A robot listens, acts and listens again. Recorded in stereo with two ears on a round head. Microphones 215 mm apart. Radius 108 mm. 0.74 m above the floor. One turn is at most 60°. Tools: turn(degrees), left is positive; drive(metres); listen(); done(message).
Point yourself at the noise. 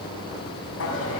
turn(degrees=60)
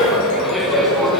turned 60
done("Facing the laughter, over 4 m away.")